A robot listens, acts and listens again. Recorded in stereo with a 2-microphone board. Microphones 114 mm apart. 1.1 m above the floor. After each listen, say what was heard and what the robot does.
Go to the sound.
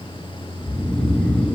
Turn 30° left.
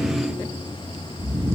So it is at 25° right. Turn 25° right.
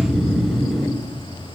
Drive 1.0 m forward.
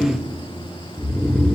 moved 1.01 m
Drive 1.0 m forward.
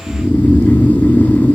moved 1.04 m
The snoring is now 15° left. Turn 15° left.
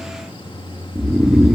Drive 1.0 m forward.
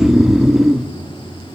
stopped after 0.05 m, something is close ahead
I am next to the snoring.